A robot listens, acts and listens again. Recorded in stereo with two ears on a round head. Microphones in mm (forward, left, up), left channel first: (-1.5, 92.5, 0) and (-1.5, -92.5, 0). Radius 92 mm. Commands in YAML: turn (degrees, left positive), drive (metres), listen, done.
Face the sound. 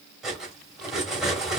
turn: 30
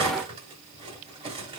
turn: -30
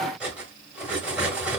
done: "Found it: cutlery clinking, straight ahead, 1 to 2 m away."